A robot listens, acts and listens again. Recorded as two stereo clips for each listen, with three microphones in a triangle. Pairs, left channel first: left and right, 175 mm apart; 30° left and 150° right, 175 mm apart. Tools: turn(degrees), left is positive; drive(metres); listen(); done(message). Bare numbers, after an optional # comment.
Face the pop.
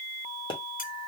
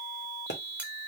# The pop: 30° left.
turn(30)
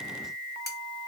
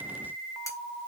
done("I heard a pop from this way, but can't make it out now.")